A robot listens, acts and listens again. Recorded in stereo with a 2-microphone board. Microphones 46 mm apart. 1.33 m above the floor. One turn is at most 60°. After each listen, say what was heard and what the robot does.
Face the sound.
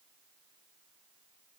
Keep listening.
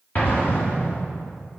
The explosion: about 35° left or 145° left. Turn 35° left.
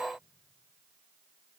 Keep listening.
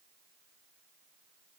I heard an explosion, but can't make it out now. It was about straight ahead or 110° left.